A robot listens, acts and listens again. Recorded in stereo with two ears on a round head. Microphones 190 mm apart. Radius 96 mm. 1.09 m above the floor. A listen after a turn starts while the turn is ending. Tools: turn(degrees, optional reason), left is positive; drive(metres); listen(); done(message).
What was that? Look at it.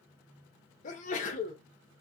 turn(degrees=40, reason="The sneeze: about 40° left or 140° left.")
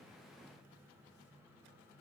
listen()
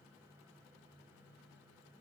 done("I heard a sneeze, but can't make it out now. It was about straight ahead or 100° left.")